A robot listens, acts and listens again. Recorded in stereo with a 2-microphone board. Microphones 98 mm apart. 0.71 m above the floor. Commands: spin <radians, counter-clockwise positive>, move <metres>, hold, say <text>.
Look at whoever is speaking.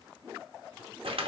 hold
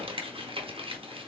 hold
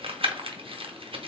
say I can't make out anyone speaking to turn to.